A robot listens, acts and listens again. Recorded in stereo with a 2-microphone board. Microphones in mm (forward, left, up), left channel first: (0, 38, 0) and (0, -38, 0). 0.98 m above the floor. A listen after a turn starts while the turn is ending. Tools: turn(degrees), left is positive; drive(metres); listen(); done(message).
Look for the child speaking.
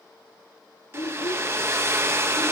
turn(degrees=90)
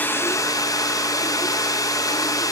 listen()
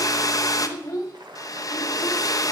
turn(degrees=40)
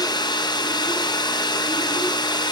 listen()
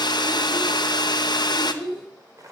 done("Facing the child speaking, 2 to 4 m away.")